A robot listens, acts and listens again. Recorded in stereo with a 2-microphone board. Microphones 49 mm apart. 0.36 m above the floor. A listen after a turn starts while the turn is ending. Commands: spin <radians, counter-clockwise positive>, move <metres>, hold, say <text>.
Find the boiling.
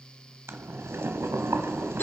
spin -1.13
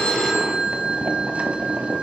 spin -0.61
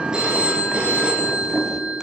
spin -0.26
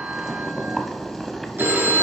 say Facing the boiling, 1 to 2 m away.